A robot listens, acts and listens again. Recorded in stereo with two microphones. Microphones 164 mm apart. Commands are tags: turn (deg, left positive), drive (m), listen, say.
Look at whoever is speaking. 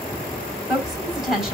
<turn deg="-30"/>
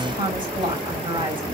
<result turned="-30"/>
<turn deg="-145"/>
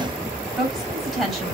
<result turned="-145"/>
<say>Found it: a woman speaking, straight ahead.</say>